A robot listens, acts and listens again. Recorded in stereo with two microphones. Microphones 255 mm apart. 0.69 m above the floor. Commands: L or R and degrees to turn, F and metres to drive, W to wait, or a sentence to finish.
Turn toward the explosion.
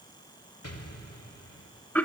L90
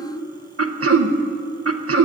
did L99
R10
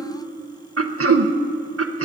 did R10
I heard an explosion from this way, but can't make it out now.